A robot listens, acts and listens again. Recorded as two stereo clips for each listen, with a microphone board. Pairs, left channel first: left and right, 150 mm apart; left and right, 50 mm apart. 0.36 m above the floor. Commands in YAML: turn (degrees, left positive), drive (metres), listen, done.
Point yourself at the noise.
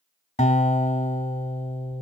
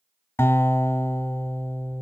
turn: 50
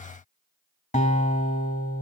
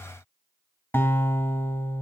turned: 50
turn: 70
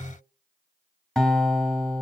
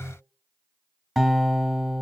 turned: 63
done: "Facing the guitar."